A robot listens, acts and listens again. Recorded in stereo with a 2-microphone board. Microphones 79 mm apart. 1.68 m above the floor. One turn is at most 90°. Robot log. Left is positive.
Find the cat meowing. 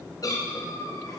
note: The cat meowing: about 50° left or 130° left.
cmd yaw +50
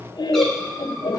cmd idle
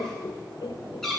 end: Found it: a cat meowing, straight ahead.